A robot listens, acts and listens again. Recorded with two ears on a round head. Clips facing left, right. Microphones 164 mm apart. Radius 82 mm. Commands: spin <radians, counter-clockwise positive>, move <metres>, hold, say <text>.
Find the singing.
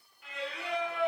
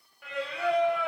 spin -0.96
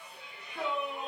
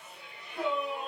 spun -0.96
say Found it: singing, straight ahead.